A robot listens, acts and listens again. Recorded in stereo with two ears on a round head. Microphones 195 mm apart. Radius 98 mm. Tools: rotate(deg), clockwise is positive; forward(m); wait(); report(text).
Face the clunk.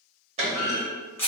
rotate(30)
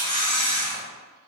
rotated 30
wait()
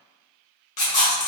report("I heard a clunk, but can't make it out now. It was about straight ahead or 120° right.")